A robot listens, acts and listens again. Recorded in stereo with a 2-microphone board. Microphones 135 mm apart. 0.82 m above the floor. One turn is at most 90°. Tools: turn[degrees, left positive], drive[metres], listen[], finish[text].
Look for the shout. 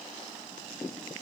Action: listen[]
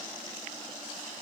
Action: listen[]
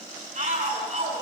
Thought: The shout: about 60° right or 120° right.
Action: turn[-60]
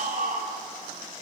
Thought: So it is at 60° right.
Action: turn[-60]
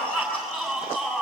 Action: finish[Found it: a shout, straight ahead.]